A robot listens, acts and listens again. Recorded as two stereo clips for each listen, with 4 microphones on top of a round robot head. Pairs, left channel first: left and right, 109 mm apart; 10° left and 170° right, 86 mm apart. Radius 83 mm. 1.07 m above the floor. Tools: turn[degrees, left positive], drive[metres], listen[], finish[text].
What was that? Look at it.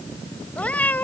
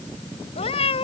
Thought: The cat meowing: 15° left.
Action: turn[15]
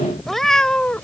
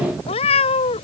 Thought: The cat meowing is now 10° left.
Action: turn[10]
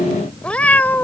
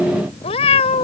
Thought: The cat meowing is now 15° left.
Action: turn[15]
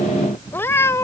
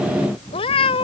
Thought: The cat meowing is now 25° left.
Action: turn[25]
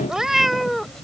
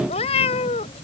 Action: finish[Found it: a cat meowing, straight ahead.]